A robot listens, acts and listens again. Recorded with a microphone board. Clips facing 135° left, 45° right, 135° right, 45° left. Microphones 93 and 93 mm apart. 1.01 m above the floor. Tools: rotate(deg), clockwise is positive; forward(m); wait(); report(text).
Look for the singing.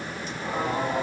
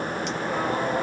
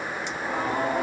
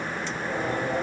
rotate(140)
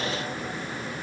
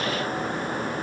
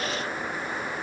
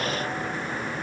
wait()
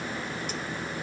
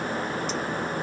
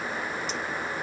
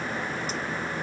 wait()
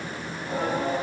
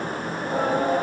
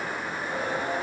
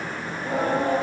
report("Found it: singing, straight ahead, 2 to 4 m away.")